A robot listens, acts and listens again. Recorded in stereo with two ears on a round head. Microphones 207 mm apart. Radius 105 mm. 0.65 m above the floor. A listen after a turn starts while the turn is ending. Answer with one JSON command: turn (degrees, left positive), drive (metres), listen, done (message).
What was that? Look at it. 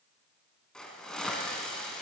{"turn": 30}
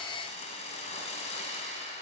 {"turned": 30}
{"turn": 150}
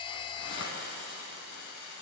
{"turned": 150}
{"turn": 55}
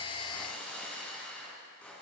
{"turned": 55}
{"done": "Facing the hiss."}